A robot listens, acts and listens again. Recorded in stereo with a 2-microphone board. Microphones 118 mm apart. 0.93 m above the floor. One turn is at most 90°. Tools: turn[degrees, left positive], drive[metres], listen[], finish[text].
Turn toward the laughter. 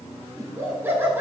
Thought: The laughter: about 20° right or 160° right.
Action: turn[-20]
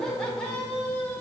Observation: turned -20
Thought: So it is at 15° left.
Action: turn[15]
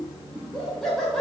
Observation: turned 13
Action: finish[Facing the laughter, over 4 m away.]